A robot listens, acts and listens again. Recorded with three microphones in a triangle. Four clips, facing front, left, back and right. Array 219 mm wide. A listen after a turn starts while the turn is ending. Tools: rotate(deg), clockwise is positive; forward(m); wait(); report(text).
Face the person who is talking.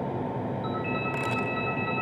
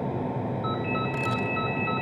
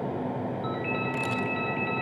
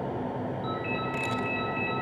wait()
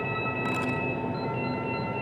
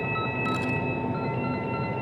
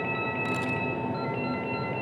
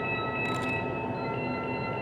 wait()
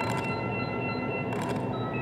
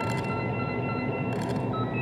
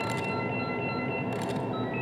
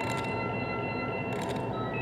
report("I can't make out anyone speaking, only a ringtone.")